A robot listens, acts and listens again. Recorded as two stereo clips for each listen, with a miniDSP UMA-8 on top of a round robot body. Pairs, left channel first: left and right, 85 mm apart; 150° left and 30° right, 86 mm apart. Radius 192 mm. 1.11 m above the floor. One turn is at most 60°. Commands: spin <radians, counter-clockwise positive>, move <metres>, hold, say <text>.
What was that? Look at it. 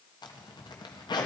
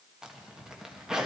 spin 0.96
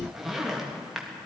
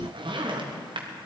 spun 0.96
say Found it: a zipper, straight ahead, 1 to 2 m away.